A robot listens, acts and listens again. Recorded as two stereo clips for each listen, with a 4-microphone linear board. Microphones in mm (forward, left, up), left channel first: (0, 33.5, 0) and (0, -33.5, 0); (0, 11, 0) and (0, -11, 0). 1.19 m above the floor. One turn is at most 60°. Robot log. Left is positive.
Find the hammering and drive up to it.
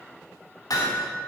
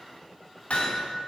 cmd yaw +60
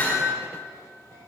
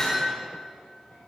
note: So it is at 30° left.
cmd yaw +30
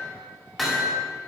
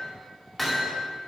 cmd fwd 1.0
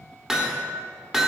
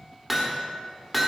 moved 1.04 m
note: The hammering is now 10° right.
cmd yaw -10
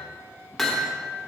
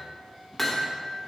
cmd fwd 1.0
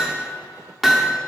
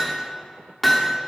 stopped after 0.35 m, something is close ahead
end: Arrived at the hammering, straight ahead.